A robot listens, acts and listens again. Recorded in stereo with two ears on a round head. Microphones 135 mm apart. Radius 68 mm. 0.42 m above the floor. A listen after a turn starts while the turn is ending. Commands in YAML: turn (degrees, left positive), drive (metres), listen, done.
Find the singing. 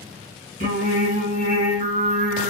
turn: -55
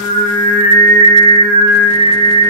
turn: -75
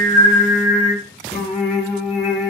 done: "Facing the singing."